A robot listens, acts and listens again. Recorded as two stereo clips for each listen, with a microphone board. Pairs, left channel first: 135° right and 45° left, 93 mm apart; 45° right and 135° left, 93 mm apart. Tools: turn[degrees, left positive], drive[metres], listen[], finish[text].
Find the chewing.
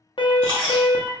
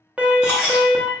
Thought: The chewing: 55° left.
Action: turn[55]
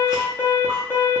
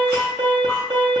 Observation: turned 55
Action: listen[]
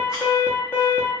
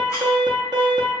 Action: listen[]
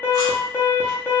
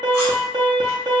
Action: finish[I heard chewing from this way, but can't make it out now.]